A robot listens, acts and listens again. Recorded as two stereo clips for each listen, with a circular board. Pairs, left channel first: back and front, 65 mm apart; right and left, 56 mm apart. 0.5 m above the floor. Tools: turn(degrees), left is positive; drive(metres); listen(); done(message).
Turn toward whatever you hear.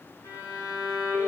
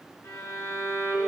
turn(degrees=-145)
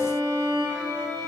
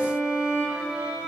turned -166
turn(degrees=20)
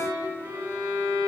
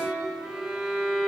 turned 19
done("Facing the violin, over 4 m away.")